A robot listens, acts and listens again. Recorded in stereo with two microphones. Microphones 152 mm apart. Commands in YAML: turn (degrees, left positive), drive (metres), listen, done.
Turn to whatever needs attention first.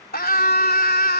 turn: 90
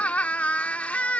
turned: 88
turn: 10
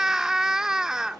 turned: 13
done: "Facing the scream."